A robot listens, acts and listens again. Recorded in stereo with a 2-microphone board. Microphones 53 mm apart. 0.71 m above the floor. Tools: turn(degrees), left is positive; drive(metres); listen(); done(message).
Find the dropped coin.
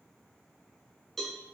listen()
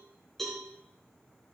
listen()
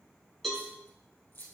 turn(degrees=50)
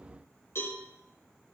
listen()
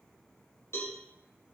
done("I heard a dropped coin, but can't make it out now. It was about straight ahead or 80° left.")